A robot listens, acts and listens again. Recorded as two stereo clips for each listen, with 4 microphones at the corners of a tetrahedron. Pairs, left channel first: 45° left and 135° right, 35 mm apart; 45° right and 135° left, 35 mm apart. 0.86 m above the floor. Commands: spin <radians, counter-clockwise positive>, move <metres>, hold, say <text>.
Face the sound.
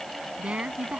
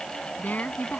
spin -1.40
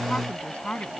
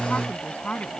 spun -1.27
say Found it: a woman speaking, straight ahead.